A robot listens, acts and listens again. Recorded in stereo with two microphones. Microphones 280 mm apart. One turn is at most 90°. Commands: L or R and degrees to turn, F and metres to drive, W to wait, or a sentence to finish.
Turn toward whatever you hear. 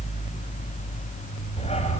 L25
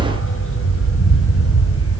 L90
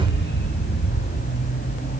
L35
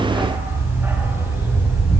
R10
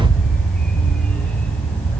Facing the dog barking.